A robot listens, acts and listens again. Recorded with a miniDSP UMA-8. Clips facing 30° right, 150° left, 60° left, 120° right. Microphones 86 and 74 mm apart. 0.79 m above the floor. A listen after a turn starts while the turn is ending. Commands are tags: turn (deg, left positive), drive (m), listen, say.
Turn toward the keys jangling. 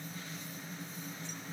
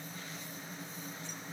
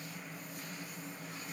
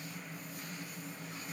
<listen/>
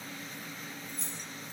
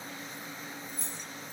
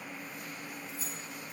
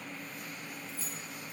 <turn deg="-10"/>
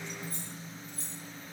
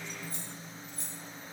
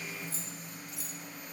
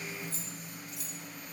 <turn deg="15"/>
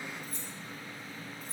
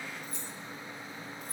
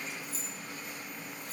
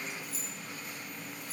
<turn deg="25"/>
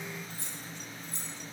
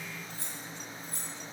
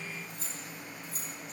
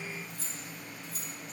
<turn deg="20"/>
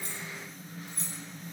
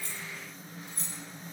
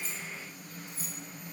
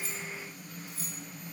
<say>Facing the keys jangling, 2 to 4 m away.</say>